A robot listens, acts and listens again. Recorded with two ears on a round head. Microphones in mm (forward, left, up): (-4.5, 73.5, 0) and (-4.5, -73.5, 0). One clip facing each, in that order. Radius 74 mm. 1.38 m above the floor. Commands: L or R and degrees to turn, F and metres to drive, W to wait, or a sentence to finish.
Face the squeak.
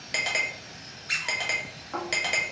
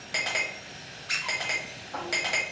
L30
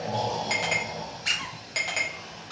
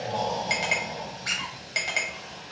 L140
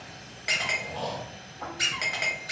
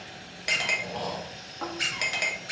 L10
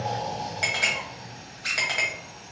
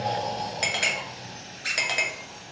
Facing the squeak.